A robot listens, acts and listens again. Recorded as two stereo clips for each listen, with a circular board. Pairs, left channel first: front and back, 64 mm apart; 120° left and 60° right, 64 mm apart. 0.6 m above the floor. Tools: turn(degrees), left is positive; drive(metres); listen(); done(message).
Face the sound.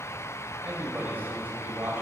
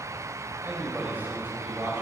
turn(degrees=-120)
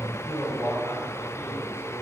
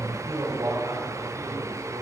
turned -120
turn(degrees=-50)
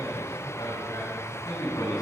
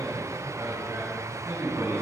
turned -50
turn(degrees=-15)
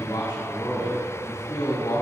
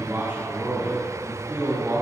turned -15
done("Facing the man speaking, over 4 m away.")